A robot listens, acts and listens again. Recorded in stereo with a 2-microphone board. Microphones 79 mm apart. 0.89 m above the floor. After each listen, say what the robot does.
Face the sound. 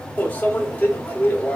Turn 20° left.
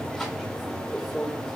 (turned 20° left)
Facing the microwave, 1 to 2 m away.